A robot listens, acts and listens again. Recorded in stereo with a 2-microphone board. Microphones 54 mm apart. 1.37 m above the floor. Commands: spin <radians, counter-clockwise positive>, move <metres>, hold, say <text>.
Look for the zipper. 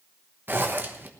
spin -0.70
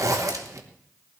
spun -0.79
spin -1.66
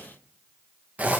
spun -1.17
spin -0.52
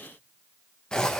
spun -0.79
spin 0.26
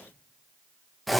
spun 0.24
say Facing the zipper, 1 to 2 m away.